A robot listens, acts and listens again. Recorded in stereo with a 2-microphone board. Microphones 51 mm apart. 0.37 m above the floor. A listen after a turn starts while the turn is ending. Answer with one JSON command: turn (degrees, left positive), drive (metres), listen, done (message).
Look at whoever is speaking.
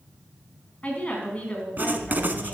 {"turn": 25}
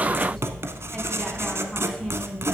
{"listen": true}
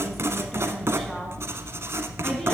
{"listen": true}
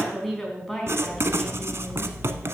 {"done": "Facing the woman speaking."}